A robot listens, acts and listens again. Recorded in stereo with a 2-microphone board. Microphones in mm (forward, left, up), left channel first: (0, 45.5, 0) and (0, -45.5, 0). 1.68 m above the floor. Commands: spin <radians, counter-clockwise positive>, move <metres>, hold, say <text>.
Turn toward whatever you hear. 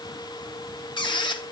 spin 1.05
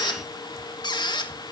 spin 0.96
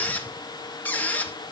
spin 0.35
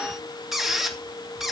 say Found it: a squeak, straight ahead, 2 to 4 m away.